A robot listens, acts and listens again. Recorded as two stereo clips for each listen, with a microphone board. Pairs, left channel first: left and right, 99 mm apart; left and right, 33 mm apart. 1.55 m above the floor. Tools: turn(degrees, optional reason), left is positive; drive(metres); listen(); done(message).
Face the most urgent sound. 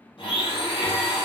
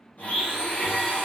listen()
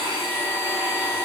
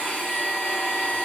listen()
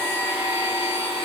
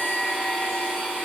done("I can't make out anything urgent to turn to.")